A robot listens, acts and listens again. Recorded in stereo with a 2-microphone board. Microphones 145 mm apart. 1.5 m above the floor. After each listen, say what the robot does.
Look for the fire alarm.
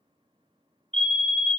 Turn 40° right.
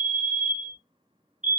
Turn 90° right.
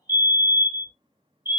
Turn 15° right.
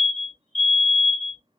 Found it: a fire alarm, straight ahead.